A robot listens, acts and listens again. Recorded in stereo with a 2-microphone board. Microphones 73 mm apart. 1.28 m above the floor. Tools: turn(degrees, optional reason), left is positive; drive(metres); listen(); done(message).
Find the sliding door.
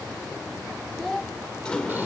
turn(degrees=30)
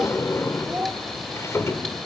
turn(degrees=135, reason="So it is at 135° left.")
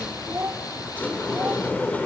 turn(degrees=25, reason="The sliding door is now 25° left.")
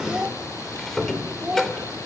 done("Facing the sliding door.")